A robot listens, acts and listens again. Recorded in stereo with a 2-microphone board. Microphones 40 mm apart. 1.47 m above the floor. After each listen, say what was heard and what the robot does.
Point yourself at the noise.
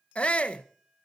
The shout: about 30° left or 150° left. Turn 30° left.
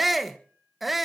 Facing the shout, 1 to 2 m away.